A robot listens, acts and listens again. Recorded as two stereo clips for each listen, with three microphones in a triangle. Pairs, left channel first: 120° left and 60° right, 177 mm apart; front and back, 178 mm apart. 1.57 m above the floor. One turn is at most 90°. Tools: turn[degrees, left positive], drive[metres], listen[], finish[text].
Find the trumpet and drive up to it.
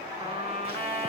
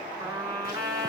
Thought: The trumpet: 110° right.
Action: turn[-90]
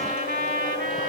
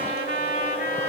Thought: The trumpet is now 25° right.
Action: turn[-25]
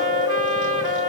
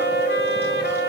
Action: listen[]
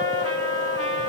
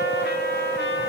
Action: listen[]
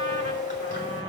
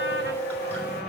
Action: finish[Facing where the trumpet came from. I can't hear it now. I did not reach it.]